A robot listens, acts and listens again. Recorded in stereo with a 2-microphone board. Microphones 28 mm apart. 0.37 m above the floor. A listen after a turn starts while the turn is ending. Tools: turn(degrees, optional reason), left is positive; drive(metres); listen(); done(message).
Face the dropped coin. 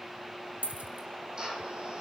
turn(degrees=-90)
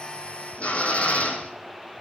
done("I heard a dropped coin from this way, but can't make it out now.")